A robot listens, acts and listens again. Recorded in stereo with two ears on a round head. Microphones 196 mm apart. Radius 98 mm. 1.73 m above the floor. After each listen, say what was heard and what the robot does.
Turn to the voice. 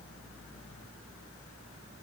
Keep listening.
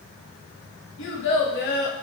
The child speaking: about 45° left or 135° left. Turn 45° left.
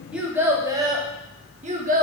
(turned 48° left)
So it is at 40° right. Turn 40° right.
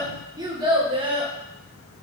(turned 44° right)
The child speaking is now 25° right. Turn 25° right.
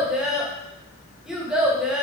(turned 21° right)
Facing the child speaking, 1 to 2 m away.